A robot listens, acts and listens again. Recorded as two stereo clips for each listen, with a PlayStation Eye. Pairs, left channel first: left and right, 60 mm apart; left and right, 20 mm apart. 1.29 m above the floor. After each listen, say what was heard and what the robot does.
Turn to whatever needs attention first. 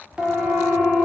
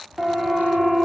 The siren: about 15° right or 165° right. Turn 15° right.
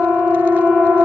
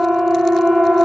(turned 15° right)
So it is at 150° right. Turn 150° right.
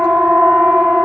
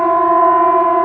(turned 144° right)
Found it: a siren, straight ahead.